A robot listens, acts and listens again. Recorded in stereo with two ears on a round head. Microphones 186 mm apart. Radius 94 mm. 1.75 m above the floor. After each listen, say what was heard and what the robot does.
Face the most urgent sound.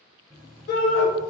The shout: about 50° left or 130° left. Turn 50° left.
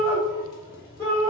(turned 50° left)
So it is at 15° left. Turn 15° left.
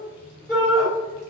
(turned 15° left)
Facing the shout.